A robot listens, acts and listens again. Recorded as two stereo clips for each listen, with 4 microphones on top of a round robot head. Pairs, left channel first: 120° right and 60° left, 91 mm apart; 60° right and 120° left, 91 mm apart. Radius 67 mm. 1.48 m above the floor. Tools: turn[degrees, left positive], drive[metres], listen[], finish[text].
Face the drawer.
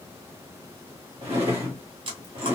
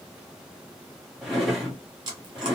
Thought: The drawer: 35° left.
Action: turn[35]
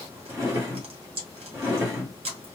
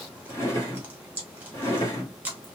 Action: finish[Found it: a drawer, straight ahead.]